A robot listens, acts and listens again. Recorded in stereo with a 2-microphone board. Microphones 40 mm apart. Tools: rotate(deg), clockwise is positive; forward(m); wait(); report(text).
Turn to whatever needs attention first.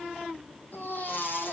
rotate(-50)
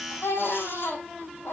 rotate(-80)
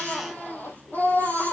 rotate(-50)
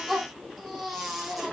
report("Facing the baby crying.")